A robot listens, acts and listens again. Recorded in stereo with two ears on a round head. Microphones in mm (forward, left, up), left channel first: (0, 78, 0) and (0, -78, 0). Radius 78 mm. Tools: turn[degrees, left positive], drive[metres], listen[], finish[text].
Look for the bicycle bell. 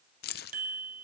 Thought: The bicycle bell: about 55° right or 125° right.
Action: turn[-55]
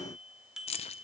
Action: finish[Found it: a bicycle bell, straight ahead.]